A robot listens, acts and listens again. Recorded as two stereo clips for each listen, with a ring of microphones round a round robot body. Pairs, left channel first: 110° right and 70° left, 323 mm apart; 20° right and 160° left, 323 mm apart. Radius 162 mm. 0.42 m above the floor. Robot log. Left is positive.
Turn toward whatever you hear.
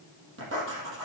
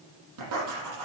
note: The writing: 120° left.
cmd yaw +120
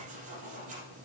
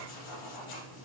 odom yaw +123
end: Facing the writing, over 4 m away.